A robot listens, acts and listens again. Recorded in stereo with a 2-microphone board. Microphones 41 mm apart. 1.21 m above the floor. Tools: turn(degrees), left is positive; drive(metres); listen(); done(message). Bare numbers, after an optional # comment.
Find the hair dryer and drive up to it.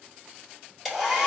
turn(-30)
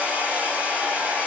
# So it is at 145° right.
turn(-145)
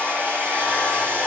# The hair dryer is now 60° right.
turn(-60)
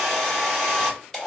# The hair dryer is now 10° left.
turn(10)
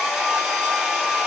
drive(1.0)
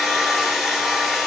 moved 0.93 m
drive(1.0)
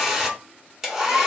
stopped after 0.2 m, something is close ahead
done("Arrived at the hair dryer, straight ahead.")